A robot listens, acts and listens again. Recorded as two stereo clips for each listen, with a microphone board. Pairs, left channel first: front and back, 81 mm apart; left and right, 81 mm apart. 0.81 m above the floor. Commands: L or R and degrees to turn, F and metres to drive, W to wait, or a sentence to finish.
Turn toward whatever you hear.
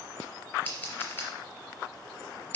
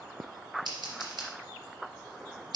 R65
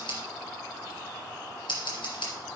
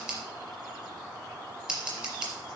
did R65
R15
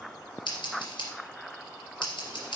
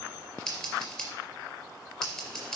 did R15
Found it: scissors, straight ahead.